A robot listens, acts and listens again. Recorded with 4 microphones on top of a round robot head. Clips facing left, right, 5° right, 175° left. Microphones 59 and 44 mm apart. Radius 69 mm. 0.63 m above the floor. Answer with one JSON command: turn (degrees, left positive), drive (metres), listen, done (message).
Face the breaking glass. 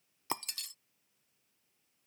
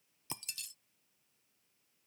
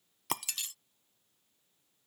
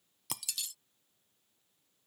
{"turn": 45}
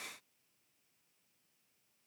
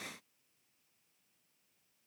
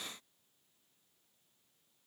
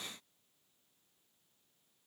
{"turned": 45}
{"done": "I heard breaking glass from this way, but can't make it out now."}